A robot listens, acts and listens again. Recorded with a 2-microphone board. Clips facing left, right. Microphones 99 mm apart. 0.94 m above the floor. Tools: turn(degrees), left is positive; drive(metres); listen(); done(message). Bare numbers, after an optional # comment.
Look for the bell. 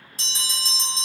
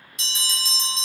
# The bell: about 35° left or 145° left.
turn(35)
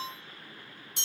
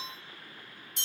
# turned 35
# So it is at 110° left.
turn(110)
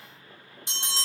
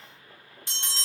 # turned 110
# The bell is now 20° left.
turn(20)
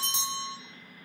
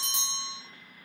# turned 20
done("Facing the bell, 1 to 2 m away.")